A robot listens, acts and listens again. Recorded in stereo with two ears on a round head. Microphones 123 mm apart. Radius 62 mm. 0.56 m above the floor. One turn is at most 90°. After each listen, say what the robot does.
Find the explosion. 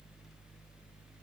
Keep listening.
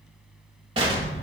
Turn 40° right.
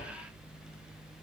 Keep listening.
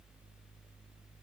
I heard an explosion, but can't make it out now. It was about straight ahead or 100° right.